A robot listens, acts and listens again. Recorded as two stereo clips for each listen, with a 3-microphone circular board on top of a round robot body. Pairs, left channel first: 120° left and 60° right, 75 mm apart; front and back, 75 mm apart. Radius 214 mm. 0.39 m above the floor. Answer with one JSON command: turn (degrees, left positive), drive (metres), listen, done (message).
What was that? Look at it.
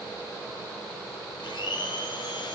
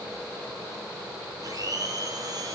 {"turn": 140}
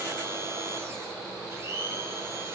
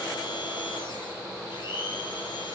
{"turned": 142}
{"done": "Facing the blender."}